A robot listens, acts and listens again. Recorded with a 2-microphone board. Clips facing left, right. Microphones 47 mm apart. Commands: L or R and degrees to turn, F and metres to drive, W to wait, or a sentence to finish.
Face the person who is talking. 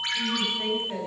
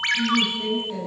L25
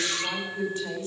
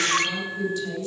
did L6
L35
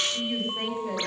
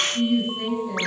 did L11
L135
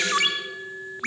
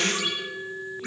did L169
R35
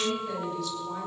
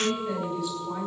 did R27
Found it: a woman speaking, straight ahead, over 4 m away.